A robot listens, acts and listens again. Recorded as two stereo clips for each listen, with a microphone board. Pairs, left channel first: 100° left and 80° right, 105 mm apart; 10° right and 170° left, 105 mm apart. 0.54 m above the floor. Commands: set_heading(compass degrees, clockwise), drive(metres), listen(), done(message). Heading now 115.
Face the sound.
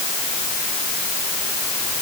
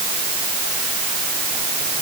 listen()
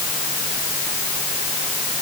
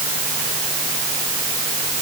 listen()
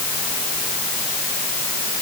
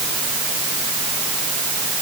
done("I can't make out anything.")